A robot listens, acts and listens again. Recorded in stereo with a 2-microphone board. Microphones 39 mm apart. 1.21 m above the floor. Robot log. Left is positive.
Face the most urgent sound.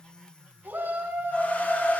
note: The shout: about 60° right or 120° right.
cmd yaw -60
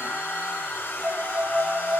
cmd idle
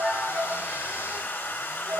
cmd idle
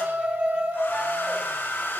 note: So it is at 60° right.
cmd yaw -60
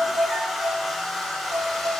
cmd idle
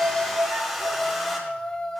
note: The shout is now 20° left.
cmd yaw +20
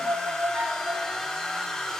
cmd idle
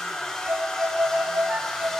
cmd idle
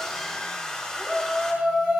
end: Found it: a shout, straight ahead.